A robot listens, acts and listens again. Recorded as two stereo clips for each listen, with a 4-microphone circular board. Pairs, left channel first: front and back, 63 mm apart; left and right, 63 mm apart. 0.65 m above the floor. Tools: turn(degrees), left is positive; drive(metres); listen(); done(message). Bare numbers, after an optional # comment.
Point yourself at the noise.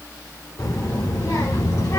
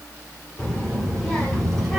done("Facing the child speaking, 2 to 4 m away.")